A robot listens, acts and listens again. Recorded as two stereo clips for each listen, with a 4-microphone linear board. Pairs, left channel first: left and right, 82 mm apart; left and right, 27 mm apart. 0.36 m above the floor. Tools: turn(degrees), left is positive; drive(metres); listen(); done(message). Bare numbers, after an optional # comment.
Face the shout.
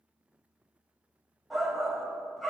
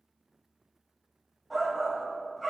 turn(30)
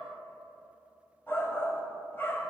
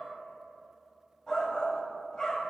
# So it is at 150° left.
turn(150)
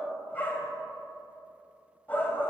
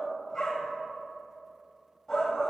# The shout is now 25° left.
turn(25)
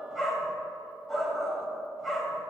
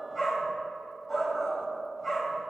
done("Found it: a shout, straight ahead.")